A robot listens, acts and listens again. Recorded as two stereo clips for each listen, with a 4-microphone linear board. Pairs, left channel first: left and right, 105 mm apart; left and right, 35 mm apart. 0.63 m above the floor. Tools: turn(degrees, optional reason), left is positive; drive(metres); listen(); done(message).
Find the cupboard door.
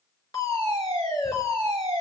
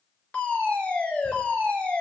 listen()
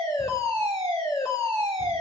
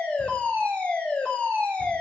listen()
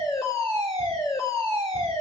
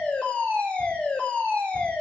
done("I can't make out a cupboard door to turn to.")